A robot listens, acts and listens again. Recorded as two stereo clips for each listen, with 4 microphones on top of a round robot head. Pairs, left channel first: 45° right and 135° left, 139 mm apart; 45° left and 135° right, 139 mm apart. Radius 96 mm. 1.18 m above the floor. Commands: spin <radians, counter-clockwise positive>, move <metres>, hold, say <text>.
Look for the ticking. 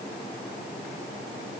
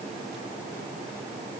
hold
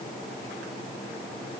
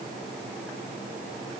hold
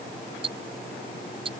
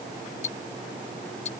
spin 1.48
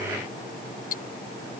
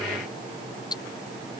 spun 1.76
spin -0.35
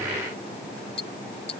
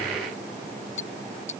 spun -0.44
say Facing the ticking.